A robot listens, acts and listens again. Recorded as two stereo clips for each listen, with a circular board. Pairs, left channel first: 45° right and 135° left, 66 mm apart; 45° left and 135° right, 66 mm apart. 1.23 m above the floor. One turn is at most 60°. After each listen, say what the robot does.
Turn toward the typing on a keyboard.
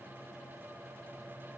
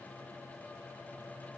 Keep listening.
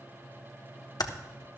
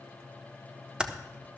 Turn 60° right.
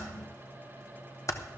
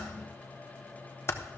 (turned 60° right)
Facing the typing on a keyboard, 1 to 2 m away.